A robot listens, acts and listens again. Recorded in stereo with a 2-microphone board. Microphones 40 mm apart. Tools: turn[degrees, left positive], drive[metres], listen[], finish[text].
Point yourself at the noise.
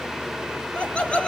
Thought: The laughter: about 30° left or 150° left.
Action: turn[30]
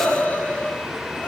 Thought: So it is at 110° left.
Action: turn[110]
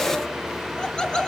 Thought: The laughter is now 25° left.
Action: turn[25]
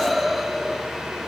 Action: finish[Found it: laughter, straight ahead, 2 to 4 m away.]